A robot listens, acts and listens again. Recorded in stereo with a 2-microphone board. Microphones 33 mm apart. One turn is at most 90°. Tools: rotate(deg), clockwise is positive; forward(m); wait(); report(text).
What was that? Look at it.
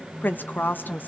rotate(-90)
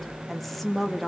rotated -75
report("Found it: a woman speaking, straight ahead, 2 to 4 m away.")